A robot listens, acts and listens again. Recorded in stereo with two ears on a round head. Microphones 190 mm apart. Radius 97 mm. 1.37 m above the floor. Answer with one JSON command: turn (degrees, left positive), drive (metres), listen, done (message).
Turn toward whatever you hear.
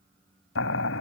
{"turn": 65}
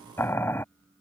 {"turn": 10}
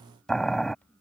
{"done": "Facing the boiling."}